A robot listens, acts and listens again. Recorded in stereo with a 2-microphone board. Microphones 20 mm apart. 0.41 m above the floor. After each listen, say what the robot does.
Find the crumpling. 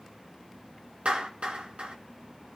Keep listening.
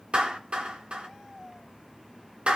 Keep listening.
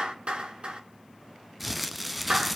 Turn 30° left.
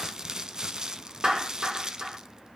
Turn 30° right.
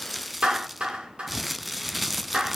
Found it: crumpling, straight ahead.